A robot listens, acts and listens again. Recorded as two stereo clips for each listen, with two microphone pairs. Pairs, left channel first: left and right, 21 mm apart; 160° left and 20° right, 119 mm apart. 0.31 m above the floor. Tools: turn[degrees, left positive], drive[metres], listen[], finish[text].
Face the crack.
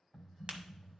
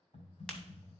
Thought: The crack: 120° right.
Action: turn[-120]
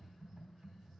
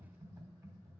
Action: finish[I heard a crack from this way, but can't make it out now.]